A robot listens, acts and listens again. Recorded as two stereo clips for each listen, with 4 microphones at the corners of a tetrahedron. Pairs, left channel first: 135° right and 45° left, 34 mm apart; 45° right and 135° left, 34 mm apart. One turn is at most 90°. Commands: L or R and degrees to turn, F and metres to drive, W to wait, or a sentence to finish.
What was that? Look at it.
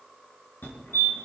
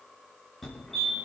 R90
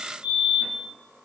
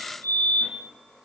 R30
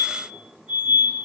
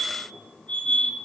L10
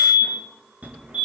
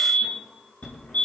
Facing the fire alarm, over 4 m away.